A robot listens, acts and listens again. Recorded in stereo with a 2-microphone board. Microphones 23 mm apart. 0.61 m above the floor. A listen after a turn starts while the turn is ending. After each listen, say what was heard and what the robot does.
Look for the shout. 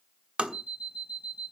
Keep listening.
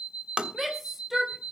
Turn 30° right.
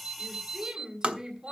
So it is at 140° right. Turn 140° right.
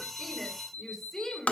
The shout is now 25° left. Turn 25° left.
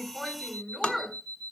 Facing the shout.